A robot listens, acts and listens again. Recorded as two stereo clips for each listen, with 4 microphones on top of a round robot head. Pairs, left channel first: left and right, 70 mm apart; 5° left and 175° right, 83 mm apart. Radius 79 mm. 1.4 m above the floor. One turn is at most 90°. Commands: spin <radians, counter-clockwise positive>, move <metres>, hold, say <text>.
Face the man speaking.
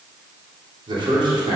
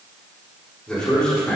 spin -1.31
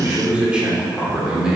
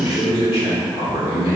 spin -0.17
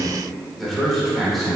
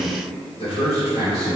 say Facing the man speaking, over 4 m away.